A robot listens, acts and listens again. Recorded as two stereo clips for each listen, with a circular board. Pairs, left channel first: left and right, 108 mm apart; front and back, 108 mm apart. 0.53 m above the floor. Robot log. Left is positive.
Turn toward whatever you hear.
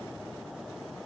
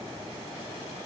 cmd idle
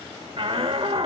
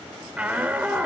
note: The shout: 105° right.
cmd yaw -105
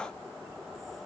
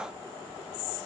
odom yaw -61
note: Nothing new. It was at 45° right.
cmd yaw -45
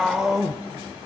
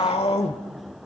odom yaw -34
end: Found it: a shout, straight ahead.